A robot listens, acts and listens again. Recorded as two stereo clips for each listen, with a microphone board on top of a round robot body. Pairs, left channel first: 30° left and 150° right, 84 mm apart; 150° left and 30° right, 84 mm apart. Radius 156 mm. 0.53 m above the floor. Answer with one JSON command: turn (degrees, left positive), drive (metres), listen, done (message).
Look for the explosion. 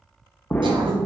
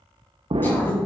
{"turn": -40}
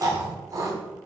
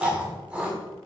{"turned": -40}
{"done": "Facing where the explosion came from. I can't hear it now."}